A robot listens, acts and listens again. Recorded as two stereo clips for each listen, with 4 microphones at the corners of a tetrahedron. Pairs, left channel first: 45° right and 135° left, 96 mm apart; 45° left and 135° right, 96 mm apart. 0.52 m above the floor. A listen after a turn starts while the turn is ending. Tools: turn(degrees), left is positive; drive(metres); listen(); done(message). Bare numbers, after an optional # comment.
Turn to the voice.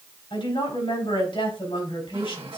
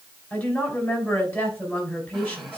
# The woman speaking: 30° right.
turn(-30)
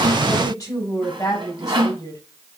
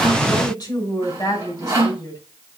done("Facing the woman speaking.")